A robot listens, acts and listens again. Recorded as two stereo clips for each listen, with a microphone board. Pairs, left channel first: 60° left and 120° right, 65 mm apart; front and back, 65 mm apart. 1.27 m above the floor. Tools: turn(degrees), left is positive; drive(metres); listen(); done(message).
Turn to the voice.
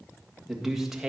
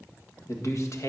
turn(degrees=-35)
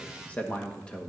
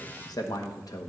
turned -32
turn(degrees=-15)
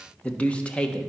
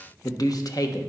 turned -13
turn(degrees=-15)
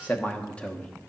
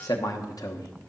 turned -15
turn(degrees=-15)
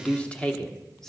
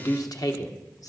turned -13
turn(degrees=-15)
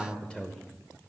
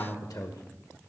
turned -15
turn(degrees=-15)
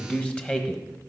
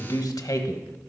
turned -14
turn(degrees=-10)
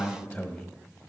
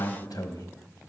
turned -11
done("Found it: a man speaking, straight ahead, 1 to 2 m away.")